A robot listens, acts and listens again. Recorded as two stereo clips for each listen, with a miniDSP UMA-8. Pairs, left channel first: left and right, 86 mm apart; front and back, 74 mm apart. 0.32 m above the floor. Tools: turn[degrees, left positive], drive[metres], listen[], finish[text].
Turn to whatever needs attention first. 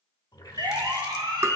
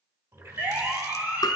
Thought: The siren: 115° right.
Action: turn[-115]
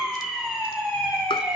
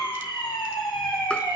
Thought: The siren is now 10° right.
Action: turn[-10]
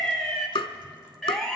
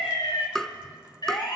Action: finish[Found it: a siren, straight ahead, 2 to 4 m away.]